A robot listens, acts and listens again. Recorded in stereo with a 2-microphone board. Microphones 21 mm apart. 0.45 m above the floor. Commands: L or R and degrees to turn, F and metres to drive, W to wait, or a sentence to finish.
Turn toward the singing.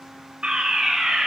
W
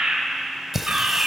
R15
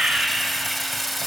Found it: singing, straight ahead.